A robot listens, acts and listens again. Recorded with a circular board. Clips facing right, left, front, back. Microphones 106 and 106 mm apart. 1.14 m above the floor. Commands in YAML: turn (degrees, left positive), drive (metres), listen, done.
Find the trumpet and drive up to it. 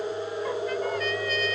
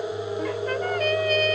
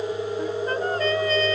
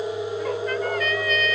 turn: 55
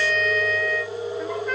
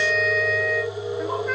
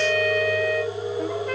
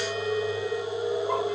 drive: 1.0
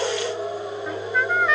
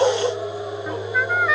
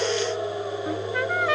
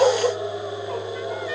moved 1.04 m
drive: 1.0
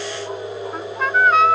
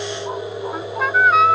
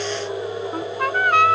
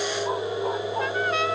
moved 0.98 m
drive: 1.0
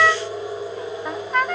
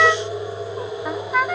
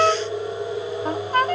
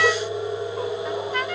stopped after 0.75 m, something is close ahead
done: "Arrived at the trumpet, straight ahead."